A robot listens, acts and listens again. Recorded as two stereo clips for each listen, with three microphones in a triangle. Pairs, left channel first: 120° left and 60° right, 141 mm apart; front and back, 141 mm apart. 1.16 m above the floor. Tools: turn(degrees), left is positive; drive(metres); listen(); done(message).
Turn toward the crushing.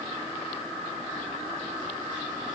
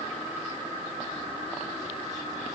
listen()
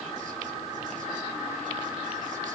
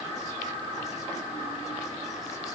listen()
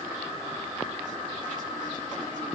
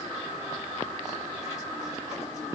done("I can't make out crushing to turn to.")